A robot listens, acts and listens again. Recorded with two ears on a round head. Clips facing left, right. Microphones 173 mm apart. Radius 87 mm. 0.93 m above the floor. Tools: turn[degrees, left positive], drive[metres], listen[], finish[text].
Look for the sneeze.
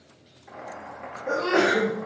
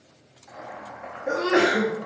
Thought: The sneeze: about 25° right or 155° right.
Action: turn[-25]
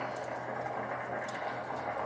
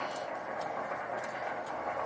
Action: listen[]
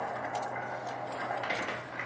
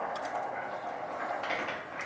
Action: finish[I heard a sneeze, but can't make it out now. It was about straight ahead or 130° right.]